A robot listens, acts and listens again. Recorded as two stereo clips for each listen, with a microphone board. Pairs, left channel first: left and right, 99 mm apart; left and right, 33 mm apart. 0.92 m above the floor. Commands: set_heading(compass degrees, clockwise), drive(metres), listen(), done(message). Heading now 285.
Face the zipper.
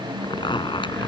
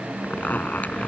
set_heading(230)
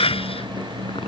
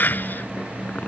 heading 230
listen()
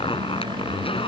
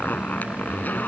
set_heading(160)
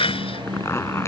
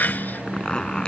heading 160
set_heading(135)
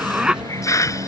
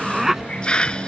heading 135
done("Found it: a zipper, straight ahead.")